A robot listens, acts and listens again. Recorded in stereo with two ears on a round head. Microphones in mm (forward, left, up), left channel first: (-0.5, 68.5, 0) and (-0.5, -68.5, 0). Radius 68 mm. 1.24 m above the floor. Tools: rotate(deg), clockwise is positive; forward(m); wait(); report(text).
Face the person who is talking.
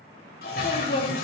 rotate(-55)
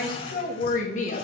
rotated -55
rotate(-45)
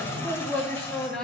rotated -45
report("Facing the woman speaking, 2 to 4 m away.")